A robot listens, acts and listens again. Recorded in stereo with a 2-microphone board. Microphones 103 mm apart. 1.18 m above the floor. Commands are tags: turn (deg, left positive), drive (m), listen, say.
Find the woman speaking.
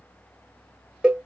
<listen/>
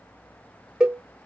<listen/>
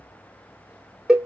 <say>I can't make out a woman speaking, only a cowbell.</say>